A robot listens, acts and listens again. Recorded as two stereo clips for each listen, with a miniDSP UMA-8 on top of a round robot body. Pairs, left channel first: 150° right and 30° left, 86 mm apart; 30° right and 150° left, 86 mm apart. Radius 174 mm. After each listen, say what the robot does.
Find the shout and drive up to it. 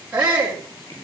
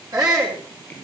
Turn 100° left.
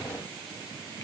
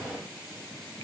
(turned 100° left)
Keep listening.
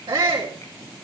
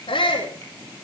Drive 1.0 m forward.
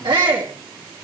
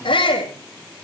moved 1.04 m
Drive 1.0 m forward.
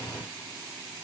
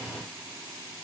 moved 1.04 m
Keep listening.
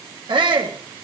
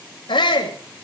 Drive 1.0 m forward.
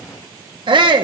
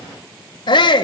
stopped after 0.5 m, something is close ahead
Arrived at the shout, straight ahead.